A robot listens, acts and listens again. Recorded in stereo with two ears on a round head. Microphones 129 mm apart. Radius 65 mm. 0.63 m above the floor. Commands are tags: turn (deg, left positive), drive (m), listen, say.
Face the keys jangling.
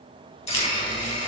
<turn deg="45"/>
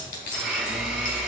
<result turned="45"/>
<turn deg="85"/>
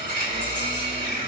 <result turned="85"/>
<listen/>
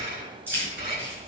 <turn deg="-15"/>
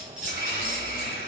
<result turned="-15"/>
<say>Facing the keys jangling, over 4 m away.</say>